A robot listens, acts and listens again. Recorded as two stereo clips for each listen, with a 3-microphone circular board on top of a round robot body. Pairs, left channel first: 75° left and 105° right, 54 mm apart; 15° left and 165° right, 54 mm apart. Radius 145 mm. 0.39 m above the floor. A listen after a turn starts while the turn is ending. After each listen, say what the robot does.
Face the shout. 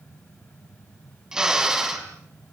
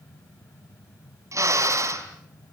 Keep listening.
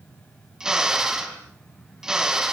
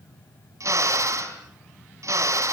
Keep listening.
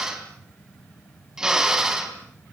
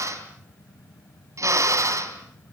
I can't make out a shout to turn to.